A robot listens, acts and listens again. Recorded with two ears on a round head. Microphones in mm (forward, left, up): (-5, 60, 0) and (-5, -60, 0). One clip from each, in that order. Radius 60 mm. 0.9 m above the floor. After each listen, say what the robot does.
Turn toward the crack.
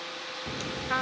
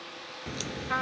Turn 40° right.
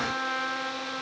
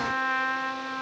Keep listening.
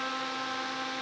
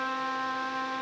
I heard a crack, but can't make it out now. It was about straight ahead or 100° right.